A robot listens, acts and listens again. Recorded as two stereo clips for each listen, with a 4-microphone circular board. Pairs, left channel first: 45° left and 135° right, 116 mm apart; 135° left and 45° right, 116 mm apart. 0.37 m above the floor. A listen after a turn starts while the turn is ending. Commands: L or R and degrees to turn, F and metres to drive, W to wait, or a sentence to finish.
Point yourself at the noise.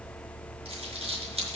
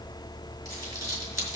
R105
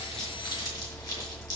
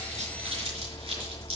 R10
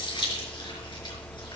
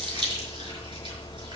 Found it: crumpling, straight ahead, over 4 m away.